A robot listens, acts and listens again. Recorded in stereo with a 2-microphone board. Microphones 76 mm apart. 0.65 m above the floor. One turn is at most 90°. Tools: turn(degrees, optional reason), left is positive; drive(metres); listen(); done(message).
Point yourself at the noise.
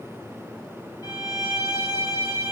turn(degrees=60, reason="The violin: about 60° left or 120° left.")
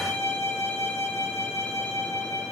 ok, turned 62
turn(degrees=45, reason="So it is at 45° left.")
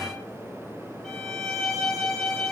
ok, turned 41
done("Found it: a violin, straight ahead, under 1 m away.")